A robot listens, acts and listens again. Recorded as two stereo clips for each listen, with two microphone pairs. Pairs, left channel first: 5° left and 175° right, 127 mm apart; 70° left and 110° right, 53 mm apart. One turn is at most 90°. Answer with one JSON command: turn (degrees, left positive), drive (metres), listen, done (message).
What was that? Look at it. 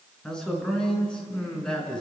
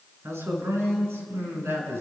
{"turn": -75}
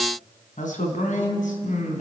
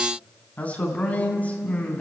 {"turn": 10}
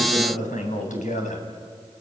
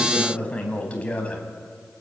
{"done": "Found it: a man speaking, straight ahead."}